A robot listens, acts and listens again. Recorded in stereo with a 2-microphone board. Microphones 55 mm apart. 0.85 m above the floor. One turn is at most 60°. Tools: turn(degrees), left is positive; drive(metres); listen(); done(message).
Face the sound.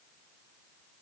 listen()
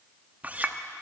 turn(degrees=-30)
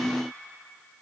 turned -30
listen()
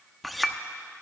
done("Facing the clink, under 1 m away.")